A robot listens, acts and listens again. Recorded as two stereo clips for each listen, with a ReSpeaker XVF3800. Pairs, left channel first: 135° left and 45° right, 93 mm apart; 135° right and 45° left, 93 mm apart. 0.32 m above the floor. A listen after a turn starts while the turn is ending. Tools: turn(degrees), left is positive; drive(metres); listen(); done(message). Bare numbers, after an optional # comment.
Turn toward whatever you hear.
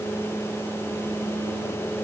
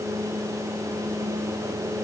listen()
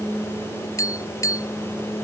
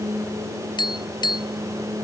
# The tapping: 170° right.
turn(-170)
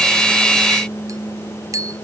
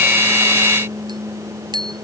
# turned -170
done("Found it: tapping, straight ahead.")